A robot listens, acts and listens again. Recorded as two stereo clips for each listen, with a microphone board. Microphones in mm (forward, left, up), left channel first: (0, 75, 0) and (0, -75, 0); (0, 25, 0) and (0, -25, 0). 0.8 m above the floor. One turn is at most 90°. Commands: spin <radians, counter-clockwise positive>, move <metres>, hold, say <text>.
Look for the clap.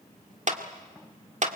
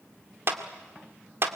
spin -0.96
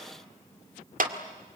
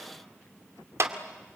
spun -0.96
spin -1.22
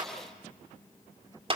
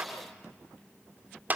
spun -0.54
spin -0.70
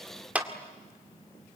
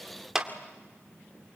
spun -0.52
spin -0.17
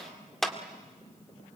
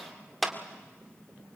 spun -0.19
say Found it: a clap, straight ahead.